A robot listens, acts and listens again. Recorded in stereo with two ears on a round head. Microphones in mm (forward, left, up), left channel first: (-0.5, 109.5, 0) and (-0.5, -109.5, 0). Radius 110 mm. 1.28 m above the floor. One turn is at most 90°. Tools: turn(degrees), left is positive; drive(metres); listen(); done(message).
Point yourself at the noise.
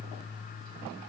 listen()
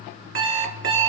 turn(degrees=-50)
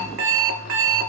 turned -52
turn(degrees=-70)
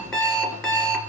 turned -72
done("Facing the alarm clock, 1 to 2 m away.")